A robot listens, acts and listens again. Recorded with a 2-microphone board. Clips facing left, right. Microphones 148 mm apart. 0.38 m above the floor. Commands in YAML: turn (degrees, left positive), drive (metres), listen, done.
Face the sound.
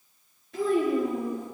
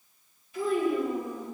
turn: 90
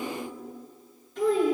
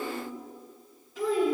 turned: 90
done: "Facing the child speaking."